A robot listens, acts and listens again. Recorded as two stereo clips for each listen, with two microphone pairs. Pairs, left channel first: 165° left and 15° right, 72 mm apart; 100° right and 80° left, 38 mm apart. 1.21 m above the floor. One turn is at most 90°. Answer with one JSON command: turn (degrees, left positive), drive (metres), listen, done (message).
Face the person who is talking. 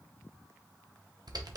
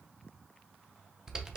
{"listen": true}
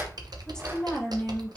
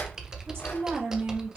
{"turn": 90}
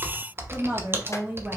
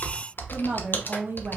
{"turn": 50}
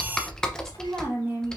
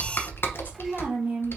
{"turn": 45}
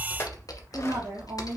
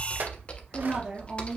{"listen": true}
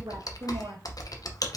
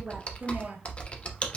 {"listen": true}
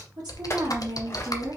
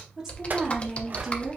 {"done": "Found it: a woman speaking, straight ahead."}